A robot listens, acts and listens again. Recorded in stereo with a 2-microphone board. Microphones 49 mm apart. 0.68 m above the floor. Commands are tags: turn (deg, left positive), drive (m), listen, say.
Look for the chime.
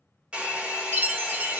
<turn deg="-45"/>
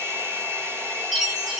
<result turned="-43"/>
<say>Found it: a chime, straight ahead.</say>